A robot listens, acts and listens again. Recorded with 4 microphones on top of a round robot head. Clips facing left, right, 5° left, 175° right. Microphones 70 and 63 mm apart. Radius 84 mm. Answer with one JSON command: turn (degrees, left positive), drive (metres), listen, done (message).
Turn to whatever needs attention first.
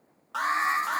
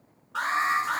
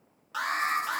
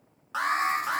{"turn": 125}
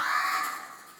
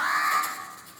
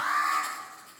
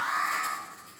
{"turn": -30}
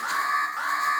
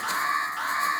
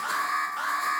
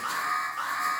{"turn": 25}
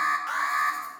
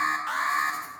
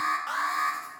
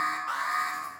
{"done": "Found it: an alarm, straight ahead."}